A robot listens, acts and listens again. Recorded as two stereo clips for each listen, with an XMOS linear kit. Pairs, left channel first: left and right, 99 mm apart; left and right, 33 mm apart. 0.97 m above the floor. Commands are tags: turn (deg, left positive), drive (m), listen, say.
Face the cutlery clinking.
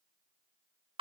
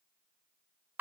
<listen/>
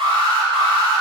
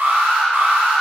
<listen/>
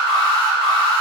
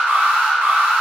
<say>I can't make out cutlery clinking, only an alarm.</say>